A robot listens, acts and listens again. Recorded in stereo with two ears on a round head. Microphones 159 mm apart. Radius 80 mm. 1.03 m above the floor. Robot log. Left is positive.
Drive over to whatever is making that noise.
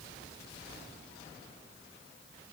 cmd idle
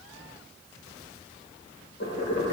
note: The boiling: about 75° left or 105° left.
cmd yaw +75
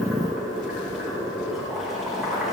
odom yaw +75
cmd fwd 1.0
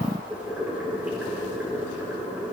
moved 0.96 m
note: The boiling is now 10° right.
cmd yaw -10
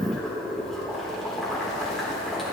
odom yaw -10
cmd fwd 1.0
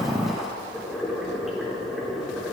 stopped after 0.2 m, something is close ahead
end: Something is in my way. I am facing the boiling but have not reached it.